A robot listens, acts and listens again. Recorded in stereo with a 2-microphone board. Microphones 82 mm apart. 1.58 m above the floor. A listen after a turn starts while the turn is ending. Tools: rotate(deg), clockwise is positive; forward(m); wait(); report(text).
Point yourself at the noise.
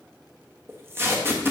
rotate(30)
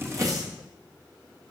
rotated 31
wait()
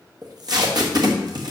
rotate(115)
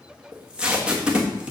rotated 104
rotate(15)
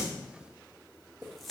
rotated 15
wait()
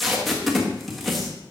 report("Found it: tape being pulled, straight ahead, 1 to 2 m away.")